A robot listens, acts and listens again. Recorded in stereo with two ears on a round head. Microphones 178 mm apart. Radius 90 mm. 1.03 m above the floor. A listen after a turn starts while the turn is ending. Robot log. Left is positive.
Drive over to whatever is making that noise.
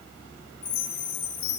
note: The chime: about 25° left or 155° left.
cmd yaw +25
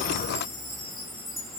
cmd fwd 1.0
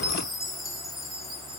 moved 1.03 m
cmd fwd 1.0
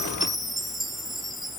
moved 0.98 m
cmd fwd 1.0
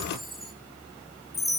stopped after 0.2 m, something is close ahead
end: Arrived at the chime, straight ahead.